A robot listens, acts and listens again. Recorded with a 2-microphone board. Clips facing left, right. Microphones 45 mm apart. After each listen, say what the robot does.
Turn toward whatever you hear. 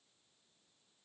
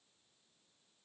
Keep listening.
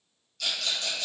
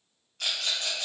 Turn 35° right.
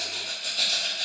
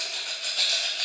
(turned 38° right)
Turn 100° right.
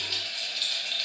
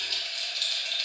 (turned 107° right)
Turn 10° left.
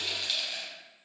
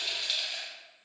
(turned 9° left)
Found it: a rattle, straight ahead, 1 to 2 m away.